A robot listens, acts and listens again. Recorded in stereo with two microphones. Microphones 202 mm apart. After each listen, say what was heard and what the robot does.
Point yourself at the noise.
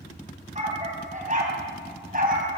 The dog barking: about 45° right or 135° right. Turn 45° right.
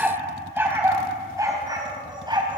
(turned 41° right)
So it is at 25° right. Turn 25° right.
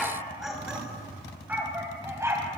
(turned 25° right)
The dog barking is now 15° right. Turn 15° right.
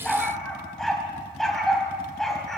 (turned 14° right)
Found it: a dog barking, straight ahead, 2 to 4 m away.